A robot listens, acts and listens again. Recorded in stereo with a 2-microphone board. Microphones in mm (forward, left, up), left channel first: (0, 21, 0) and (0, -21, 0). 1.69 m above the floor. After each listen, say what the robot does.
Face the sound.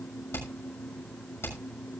Turn 75° left.
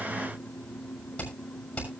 Turn 30° left.
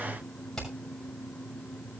Turn 10° left.
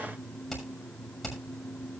Found it: hammering, straight ahead.